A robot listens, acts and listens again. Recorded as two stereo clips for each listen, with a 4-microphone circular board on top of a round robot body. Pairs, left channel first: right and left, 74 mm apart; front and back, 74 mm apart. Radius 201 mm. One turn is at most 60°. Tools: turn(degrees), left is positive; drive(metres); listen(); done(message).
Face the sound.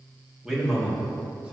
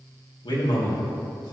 turn(degrees=15)
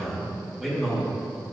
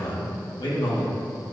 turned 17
turn(degrees=10)
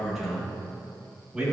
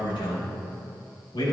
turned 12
turn(degrees=10)
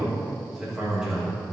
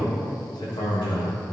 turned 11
turn(degrees=10)
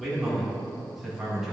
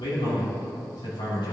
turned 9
done("Found it: a man speaking, straight ahead.")